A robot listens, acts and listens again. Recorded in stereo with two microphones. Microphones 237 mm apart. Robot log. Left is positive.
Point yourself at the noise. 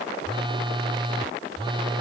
note: The phone buzzing: about 20° right or 160° right.
cmd yaw -20
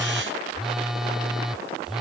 end: Found it: a phone buzzing, straight ahead.